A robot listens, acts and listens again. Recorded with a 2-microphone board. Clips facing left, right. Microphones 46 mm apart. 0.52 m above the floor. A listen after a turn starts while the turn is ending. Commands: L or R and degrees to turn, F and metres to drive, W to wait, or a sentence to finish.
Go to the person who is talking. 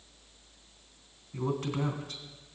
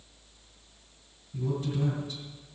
L55
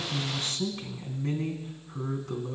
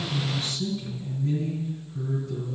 L75
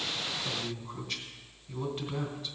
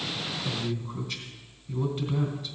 L10
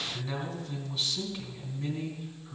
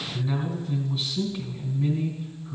F1.0
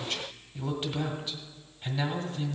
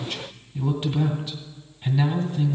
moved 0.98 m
F1.0
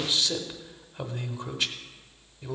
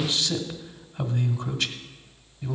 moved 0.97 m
L15
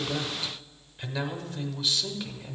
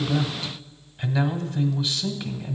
F1.0
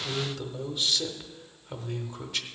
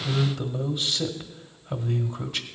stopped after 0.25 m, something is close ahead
Arrived at the man speaking, straight ahead.